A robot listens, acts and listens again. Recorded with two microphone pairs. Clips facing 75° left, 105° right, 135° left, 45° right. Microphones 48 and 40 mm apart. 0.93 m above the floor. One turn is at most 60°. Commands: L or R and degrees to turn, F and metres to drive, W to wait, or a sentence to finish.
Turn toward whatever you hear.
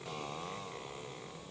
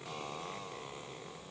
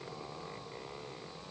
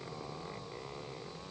W
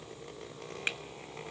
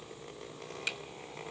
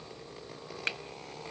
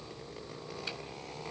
L60
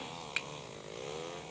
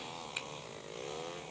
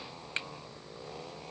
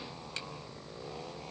L60
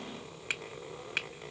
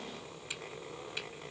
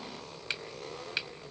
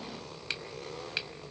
L50
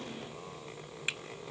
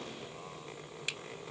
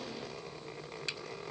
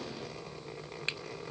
L10
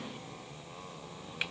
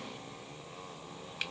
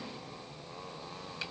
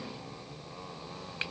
W
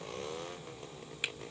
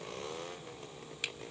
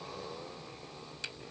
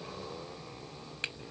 Facing the finger snap, under 1 m away.